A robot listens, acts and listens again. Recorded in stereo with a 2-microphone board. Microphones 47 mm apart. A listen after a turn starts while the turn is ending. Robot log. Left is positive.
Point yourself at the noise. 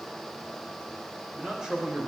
cmd yaw -30
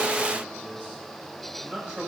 note: So it is at 155° right.
cmd yaw -155
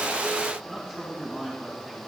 note: The man speaking is now 10° left.
cmd yaw +10
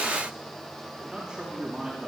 end: Found it: a man speaking, straight ahead, over 4 m away.